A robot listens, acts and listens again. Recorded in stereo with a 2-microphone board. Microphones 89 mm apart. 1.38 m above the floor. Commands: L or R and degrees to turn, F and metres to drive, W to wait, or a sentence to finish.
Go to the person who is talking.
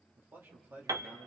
R25
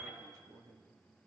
R135
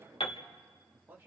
R25
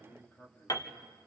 L20
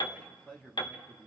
L10
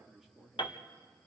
F1.0
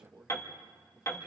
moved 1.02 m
R10
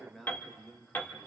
F1.0
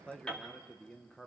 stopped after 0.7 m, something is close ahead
L10
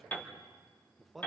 I am next to the man speaking.